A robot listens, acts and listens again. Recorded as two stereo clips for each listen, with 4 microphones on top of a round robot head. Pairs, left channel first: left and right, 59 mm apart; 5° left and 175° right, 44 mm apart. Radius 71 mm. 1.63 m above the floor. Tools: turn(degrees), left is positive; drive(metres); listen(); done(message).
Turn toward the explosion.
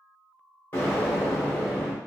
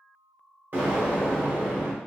turn(degrees=150)
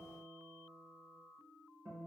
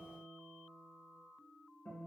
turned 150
done("I heard an explosion from this way, but can't make it out now.")